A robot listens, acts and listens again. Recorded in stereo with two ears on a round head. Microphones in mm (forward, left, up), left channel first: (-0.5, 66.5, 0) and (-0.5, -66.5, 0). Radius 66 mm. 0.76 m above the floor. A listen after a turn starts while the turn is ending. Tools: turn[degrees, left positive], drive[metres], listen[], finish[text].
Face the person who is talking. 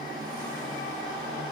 Action: listen[]
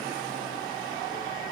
Action: listen[]
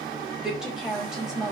Action: turn[-30]
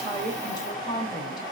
Thought: So it is at 30° left.
Action: turn[30]
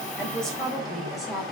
Action: finish[Found it: a woman speaking, straight ahead.]